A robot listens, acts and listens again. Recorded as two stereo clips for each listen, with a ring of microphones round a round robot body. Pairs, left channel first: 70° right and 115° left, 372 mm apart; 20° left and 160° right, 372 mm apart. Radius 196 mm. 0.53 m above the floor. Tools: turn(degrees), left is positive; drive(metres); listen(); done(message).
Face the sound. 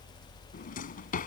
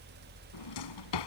done("Facing the drawer.")